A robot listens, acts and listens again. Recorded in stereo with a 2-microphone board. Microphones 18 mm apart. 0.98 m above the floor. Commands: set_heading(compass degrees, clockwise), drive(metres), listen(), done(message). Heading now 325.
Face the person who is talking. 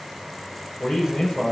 set_heading(265)
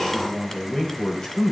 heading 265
set_heading(220)
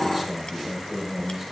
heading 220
done("Found it: a man speaking, straight ahead, over 4 m away.")